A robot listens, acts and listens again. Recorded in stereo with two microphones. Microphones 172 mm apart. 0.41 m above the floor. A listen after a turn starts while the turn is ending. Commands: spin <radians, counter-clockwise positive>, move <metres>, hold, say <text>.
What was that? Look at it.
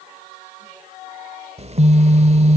spin -0.70
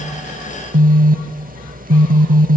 spin -1.57
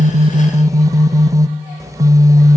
spin -0.44
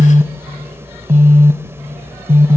spin -0.35
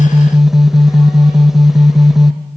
say Found it: a phone buzzing, straight ahead.